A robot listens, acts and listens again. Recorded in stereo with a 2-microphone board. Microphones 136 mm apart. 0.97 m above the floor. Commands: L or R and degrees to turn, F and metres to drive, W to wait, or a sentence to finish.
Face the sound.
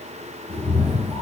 L20
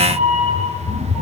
L30
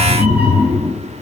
R10
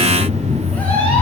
L15
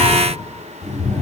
Found it: a cat meowing, straight ahead, 2 to 4 m away.